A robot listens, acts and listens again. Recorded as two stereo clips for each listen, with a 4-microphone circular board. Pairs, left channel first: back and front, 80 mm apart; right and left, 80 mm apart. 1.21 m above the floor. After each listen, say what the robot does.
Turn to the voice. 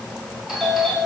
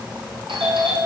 Keep listening.
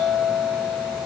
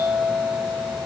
Keep listening.
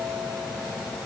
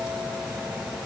I can't make out anyone speaking, only a doorbell.